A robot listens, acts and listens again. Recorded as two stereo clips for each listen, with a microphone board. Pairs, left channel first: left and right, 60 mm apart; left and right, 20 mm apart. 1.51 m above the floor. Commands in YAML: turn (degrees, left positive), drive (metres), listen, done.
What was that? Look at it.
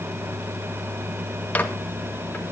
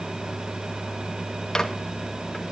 turn: 30
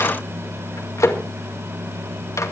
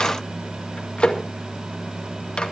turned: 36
turn: 115
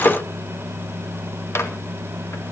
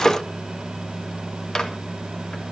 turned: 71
turn: 45
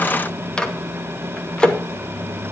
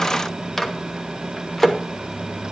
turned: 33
turn: 15
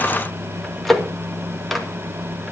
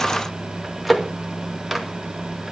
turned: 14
done: "Facing the microwave."